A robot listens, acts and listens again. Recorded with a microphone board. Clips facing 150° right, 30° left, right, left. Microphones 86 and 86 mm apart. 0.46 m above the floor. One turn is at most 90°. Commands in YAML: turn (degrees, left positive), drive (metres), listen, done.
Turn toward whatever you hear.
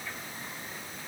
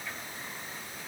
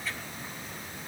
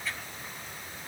listen: true
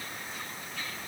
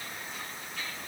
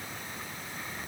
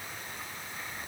listen: true
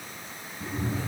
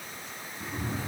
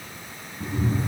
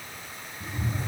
turn: -50
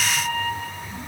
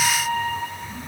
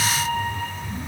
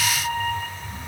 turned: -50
turn: -20
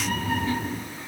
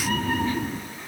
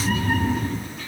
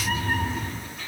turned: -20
done: "Facing the cat meowing."